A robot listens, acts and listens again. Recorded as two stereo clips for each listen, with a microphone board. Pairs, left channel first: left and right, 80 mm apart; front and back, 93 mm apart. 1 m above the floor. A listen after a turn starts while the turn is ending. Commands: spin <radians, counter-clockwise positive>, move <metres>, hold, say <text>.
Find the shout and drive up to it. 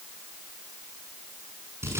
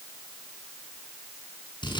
hold
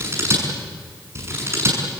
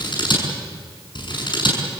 hold
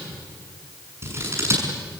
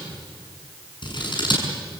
say I can't make out a shout, only scissors.